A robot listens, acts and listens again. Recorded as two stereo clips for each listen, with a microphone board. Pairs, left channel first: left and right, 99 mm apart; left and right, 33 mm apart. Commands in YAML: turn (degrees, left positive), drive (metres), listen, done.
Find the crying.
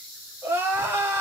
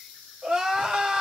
turn: -25
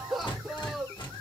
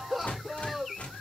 done: "Facing the crying."